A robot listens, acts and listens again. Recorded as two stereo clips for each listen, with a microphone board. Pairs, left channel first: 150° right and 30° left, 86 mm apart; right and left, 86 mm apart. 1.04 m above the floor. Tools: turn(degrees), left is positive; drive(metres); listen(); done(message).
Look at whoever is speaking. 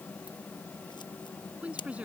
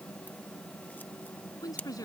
turn(degrees=-45)
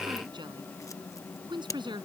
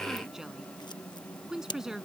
done("Found it: a woman speaking, straight ahead.")